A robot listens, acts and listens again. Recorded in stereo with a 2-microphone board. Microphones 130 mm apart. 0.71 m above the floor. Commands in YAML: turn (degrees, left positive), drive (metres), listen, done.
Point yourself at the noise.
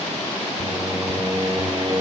turn: -40
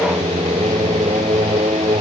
turn: -100
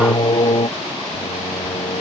turn: 40
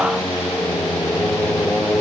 done: "Found it: singing, straight ahead."